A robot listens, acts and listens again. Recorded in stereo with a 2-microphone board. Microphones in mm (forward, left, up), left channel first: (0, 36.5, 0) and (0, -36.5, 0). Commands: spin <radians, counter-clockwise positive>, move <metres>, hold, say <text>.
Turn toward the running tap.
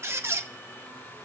hold
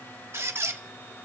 hold
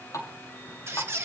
spin 0.79
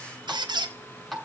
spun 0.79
say Found it: a running tap, straight ahead.